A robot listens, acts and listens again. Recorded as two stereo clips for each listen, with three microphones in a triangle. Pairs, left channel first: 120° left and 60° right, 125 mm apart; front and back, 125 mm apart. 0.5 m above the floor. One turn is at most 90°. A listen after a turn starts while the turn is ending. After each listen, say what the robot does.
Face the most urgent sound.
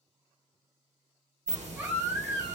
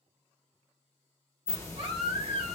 Turn 90° right.
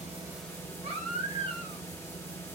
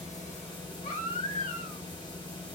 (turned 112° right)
Turn 20° right.
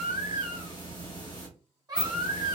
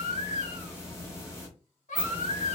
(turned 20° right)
Found it: a baby crying, straight ahead.